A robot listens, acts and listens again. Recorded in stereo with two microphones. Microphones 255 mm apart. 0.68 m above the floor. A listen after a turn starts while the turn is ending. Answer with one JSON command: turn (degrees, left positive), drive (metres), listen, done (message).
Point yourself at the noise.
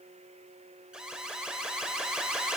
{"turn": -30}
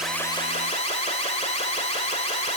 {"turn": 25}
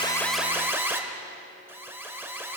{"turn": -10}
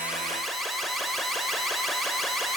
{"done": "Found it: an alarm, straight ahead, 1 to 2 m away."}